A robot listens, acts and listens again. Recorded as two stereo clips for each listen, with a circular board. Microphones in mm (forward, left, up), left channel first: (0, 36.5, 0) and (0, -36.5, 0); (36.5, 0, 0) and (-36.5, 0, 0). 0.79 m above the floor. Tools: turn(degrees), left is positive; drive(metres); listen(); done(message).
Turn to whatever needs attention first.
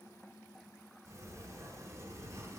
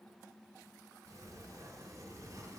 listen()
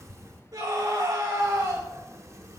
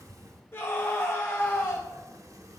turn(degrees=-60)
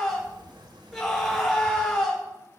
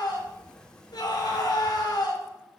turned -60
done("Facing the scream, 2 to 4 m away.")